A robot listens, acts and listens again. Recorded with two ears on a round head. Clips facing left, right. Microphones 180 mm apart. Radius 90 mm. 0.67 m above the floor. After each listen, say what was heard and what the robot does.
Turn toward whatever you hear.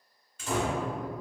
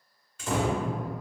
The door slam: about 70° right or 110° right. Turn 70° right.
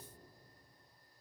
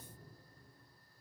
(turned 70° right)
Keep listening.
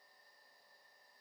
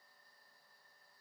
I heard a door slam, but can't make it out now. It was about straight ahead or 40° right.